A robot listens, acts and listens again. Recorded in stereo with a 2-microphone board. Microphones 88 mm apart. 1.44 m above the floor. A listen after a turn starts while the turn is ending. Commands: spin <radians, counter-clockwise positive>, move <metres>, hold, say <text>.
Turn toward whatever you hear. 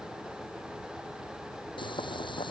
spin 1.13
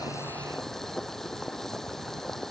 say Found it: boiling, straight ahead.